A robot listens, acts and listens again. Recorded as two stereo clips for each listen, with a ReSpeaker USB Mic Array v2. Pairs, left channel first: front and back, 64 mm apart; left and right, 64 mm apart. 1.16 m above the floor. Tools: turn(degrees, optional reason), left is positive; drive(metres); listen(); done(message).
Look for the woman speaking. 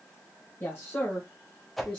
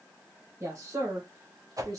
turn(degrees=-70, reason="The woman speaking: 70° right.")
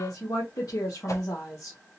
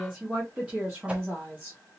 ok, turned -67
turn(degrees=-25, reason="The woman speaking is now 25° right.")
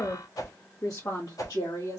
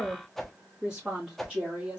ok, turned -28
turn(degrees=-20, reason="The woman speaking is now 20° right.")
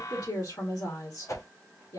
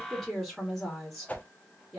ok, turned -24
done("Facing the woman speaking.")